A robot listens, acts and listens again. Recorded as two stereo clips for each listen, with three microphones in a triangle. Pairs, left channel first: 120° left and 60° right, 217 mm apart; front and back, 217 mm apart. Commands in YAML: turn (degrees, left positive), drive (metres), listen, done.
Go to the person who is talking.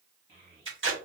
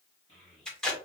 turn: -20
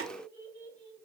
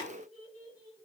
drive: 1.0
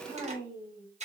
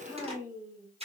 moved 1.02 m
drive: 1.0
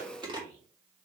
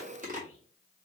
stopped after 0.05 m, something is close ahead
listen: true
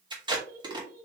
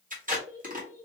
turn: -10
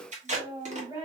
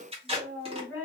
done: "Arrived at the child speaking, straight ahead."